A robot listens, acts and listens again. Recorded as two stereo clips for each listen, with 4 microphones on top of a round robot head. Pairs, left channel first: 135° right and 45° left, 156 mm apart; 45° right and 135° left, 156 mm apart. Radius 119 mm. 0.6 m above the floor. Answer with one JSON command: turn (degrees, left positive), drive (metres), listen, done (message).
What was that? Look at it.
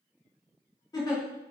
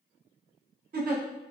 {"turn": 155}
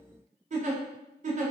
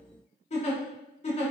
{"done": "Facing the giggle."}